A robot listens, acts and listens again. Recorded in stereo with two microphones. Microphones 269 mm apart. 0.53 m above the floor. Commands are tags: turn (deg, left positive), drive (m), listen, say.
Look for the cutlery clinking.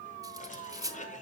<turn deg="-30"/>
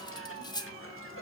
<turn deg="15"/>
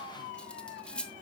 <say>Facing the cutlery clinking, under 1 m away.</say>